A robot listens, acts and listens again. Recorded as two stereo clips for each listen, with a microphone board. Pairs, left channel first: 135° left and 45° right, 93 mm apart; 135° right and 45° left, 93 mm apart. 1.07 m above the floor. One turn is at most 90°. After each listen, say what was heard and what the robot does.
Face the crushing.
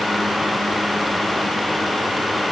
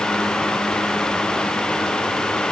Keep listening.
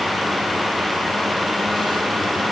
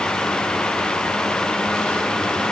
Keep listening.
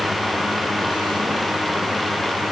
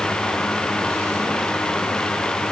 I can't make out crushing to turn to.